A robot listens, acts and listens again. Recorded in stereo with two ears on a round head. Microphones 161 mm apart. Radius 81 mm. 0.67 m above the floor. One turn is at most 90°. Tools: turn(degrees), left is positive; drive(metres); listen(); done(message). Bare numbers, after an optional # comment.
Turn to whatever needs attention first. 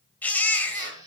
turn(30)
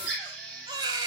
# So it is at 25° right.
turn(-25)
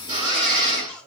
listen()
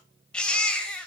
done("Found it: a baby crying, straight ahead.")